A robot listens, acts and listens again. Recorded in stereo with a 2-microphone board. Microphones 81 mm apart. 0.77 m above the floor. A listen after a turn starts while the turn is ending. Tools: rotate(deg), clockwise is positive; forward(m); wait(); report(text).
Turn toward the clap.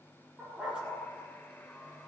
wait()
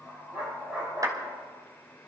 rotate(45)
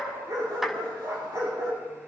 report("Facing the clap.")